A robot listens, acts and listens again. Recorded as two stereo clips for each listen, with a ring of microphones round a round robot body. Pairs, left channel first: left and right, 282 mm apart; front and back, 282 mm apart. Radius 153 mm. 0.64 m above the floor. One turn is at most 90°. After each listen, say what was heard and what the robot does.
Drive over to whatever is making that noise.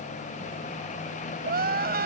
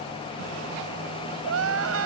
The crying: 145° right. Turn 90° right.
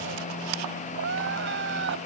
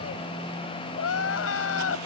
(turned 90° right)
The crying is now 35° right. Turn 35° right.
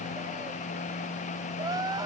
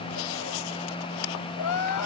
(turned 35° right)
The crying is now 10° right. Turn 10° right.
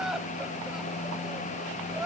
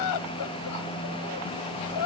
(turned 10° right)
Drive 1.0 m forward.
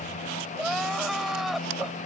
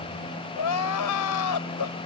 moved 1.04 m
Drive 1.0 m forward.
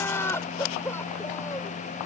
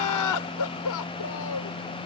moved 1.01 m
The crying is now 10° left. Turn 10° left.
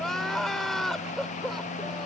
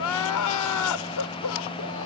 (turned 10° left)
Drive 1.0 m forward.
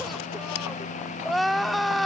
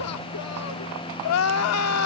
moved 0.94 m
Drive 1.0 m forward.
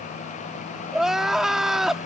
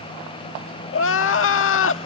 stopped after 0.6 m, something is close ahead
I am next to the crying.